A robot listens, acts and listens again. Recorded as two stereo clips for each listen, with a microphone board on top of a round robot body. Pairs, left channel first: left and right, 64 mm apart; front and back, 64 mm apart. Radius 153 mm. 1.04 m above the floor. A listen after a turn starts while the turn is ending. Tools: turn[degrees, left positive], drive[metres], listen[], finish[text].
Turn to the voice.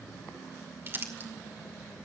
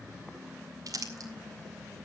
Action: listen[]
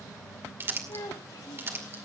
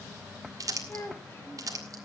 Thought: The child speaking: 55° left.
Action: turn[55]
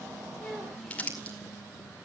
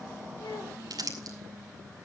Action: listen[]
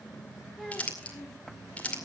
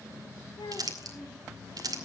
Action: finish[Facing the child speaking.]